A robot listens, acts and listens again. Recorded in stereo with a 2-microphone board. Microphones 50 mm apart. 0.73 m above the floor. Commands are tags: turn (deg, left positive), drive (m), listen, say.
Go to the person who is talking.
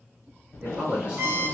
<turn deg="-20"/>
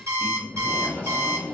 <turn deg="-135"/>
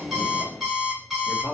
<turn deg="-45"/>
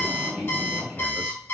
<listen/>
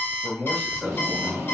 <turn deg="15"/>
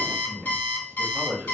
<drive m="1.0"/>
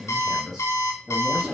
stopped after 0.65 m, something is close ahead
<say>I am next to the man speaking.</say>